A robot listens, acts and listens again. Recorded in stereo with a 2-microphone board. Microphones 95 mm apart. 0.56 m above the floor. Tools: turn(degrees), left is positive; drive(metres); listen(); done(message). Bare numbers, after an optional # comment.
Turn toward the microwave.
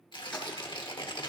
listen()
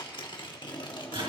# The microwave: about 65° right or 115° right.
turn(-65)
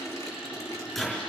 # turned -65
done("Found it: a microwave, straight ahead, over 4 m away.")